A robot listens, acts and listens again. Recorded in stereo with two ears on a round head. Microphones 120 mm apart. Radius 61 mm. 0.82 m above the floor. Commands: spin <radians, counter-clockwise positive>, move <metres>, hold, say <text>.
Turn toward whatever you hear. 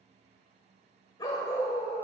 spin 0.35
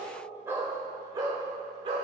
spin -0.70
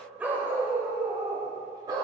spin -0.52
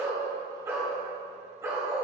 spin -0.35
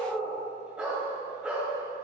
say Found it: a dog barking, straight ahead.